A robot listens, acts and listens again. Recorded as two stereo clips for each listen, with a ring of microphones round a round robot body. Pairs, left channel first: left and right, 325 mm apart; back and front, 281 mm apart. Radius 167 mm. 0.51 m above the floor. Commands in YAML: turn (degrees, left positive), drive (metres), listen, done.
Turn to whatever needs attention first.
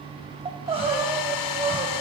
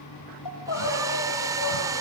turn: -165
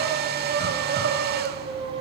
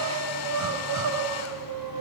turn: -30
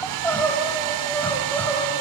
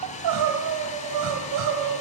done: "Found it: crying, straight ahead."